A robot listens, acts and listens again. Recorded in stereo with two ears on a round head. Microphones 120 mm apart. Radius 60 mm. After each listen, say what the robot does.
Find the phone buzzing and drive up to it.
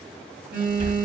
Turn 30° right.
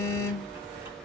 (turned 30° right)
Turn 20° left.
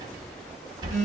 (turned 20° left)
Turn 10° left.
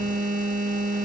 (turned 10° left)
Drive 1.0 m forward.
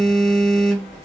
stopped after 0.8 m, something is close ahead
Arrived at the phone buzzing, straight ahead.